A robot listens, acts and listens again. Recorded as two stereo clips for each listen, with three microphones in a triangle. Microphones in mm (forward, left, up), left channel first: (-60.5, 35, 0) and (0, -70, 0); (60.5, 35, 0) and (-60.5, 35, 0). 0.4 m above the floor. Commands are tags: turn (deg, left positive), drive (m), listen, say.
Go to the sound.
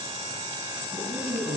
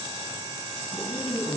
<drive m="1.0"/>
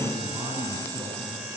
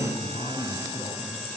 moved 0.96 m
<drive m="1.0"/>
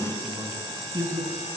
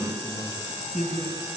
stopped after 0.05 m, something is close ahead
<say>Blocked. The man speaking is further on, straight ahead.</say>